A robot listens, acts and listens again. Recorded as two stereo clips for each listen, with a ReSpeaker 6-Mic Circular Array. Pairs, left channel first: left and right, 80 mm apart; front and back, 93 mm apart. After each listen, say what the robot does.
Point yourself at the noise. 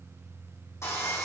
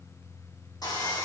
Turn 40° left.
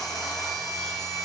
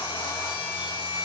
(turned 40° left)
Facing the sawing.